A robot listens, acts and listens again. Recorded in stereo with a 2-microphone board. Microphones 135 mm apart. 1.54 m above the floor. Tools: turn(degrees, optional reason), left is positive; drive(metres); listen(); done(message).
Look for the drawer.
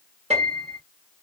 listen()
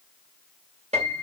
listen()
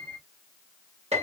done("I can't make out a drawer to turn to.")